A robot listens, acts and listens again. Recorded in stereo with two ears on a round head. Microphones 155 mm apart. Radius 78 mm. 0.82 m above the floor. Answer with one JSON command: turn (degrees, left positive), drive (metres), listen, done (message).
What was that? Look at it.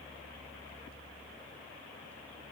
{"listen": true}
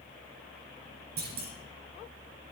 {"turn": -60}
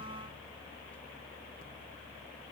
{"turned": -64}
{"listen": true}
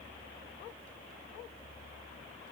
{"done": "I heard a clunk, but can't make it out now. It was about 5° left or 55° right."}